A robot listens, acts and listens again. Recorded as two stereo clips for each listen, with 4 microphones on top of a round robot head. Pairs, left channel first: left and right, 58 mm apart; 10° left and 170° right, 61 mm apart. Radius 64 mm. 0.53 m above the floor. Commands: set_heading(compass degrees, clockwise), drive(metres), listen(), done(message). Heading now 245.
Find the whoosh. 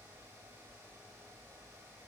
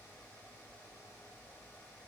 listen()
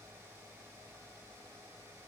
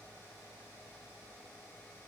listen()
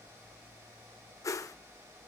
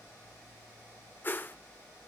set_heading(180)
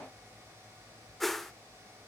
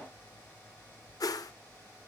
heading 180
done("Facing the whoosh, under 1 m away.")